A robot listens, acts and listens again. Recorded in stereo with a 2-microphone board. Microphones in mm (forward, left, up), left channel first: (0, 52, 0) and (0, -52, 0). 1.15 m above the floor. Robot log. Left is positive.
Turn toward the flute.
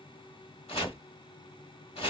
cmd idle
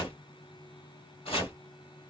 cmd idle
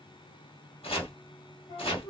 note: The flute: about 45° left or 135° left.
cmd yaw +45
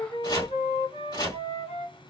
note: So it is at 90° left.
cmd yaw +90
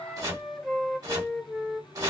end: Found it: a flute, straight ahead.